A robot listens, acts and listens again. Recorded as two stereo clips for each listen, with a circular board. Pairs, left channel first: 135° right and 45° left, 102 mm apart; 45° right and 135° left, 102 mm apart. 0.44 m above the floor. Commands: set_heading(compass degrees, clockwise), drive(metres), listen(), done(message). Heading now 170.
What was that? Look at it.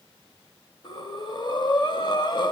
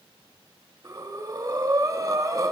set_heading(340)
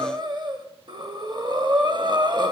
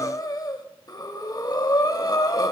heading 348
done("Facing the breathing.")